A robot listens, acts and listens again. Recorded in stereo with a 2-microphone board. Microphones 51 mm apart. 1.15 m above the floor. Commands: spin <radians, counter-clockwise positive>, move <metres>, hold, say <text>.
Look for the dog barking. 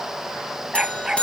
spin -0.52
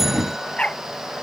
spin 0.35
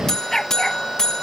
say Facing the dog barking.